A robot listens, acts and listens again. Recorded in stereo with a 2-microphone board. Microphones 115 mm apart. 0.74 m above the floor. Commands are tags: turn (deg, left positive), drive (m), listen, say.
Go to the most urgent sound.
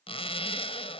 <listen/>
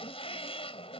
<listen/>
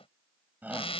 <turn deg="-15"/>
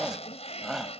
<drive m="1.0"/>
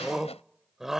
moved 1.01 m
<drive m="1.0"/>
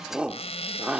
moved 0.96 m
<turn deg="-10"/>
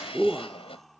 <drive m="1.0"/>
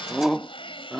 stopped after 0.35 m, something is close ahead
<say>Arrived at the shout, straight ahead.</say>